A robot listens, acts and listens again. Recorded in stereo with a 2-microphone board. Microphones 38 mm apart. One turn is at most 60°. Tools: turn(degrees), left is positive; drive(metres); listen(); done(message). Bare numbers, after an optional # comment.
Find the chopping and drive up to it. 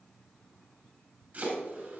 # The chopping: about 50° right or 130° right.
turn(-50)
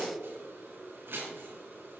# So it is at 80° right.
turn(-60)
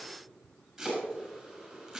drive(1.0)
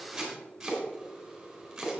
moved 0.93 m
drive(1.0)
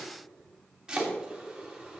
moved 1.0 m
# The chopping is now 15° right.
turn(-15)
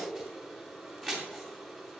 drive(1.0)
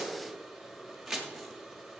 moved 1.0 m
drive(1.0)
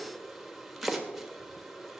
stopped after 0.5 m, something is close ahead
done("Arrived at the chopping, straight ahead.")